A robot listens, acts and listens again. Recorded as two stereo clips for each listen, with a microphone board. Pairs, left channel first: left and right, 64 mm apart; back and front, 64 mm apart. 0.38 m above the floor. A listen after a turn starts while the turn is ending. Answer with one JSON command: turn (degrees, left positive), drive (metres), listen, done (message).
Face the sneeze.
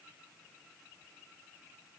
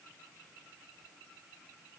{"listen": true}
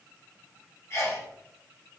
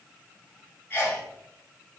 {"turn": 130}
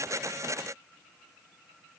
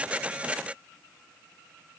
{"done": "I heard a sneeze from this way, but can't make it out now."}